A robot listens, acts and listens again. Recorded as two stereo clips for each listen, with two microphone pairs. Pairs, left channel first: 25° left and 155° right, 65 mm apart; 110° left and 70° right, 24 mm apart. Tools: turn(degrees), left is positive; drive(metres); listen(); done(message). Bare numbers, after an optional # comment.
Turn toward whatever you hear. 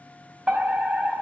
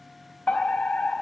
# The fire alarm: 135° left.
turn(135)
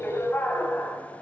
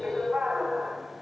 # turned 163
# The fire alarm is now 30° right.
turn(-30)
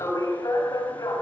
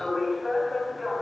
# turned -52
# The fire alarm is now 20° left.
turn(20)
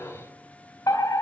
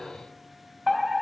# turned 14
# The fire alarm is now 10° left.
turn(10)
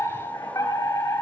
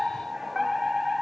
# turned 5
done("Found it: a fire alarm, straight ahead.")